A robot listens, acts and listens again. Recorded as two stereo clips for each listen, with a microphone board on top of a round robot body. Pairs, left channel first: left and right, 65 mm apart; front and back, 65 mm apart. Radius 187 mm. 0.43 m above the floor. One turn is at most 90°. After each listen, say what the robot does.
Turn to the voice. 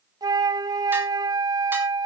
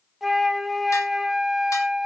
Keep listening.
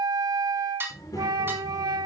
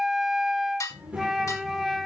Turn 90° left.
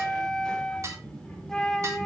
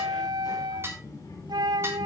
Turn 15° left.
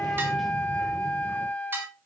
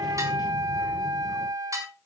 Keep listening.
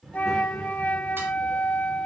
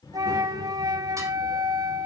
Facing the child speaking, over 4 m away.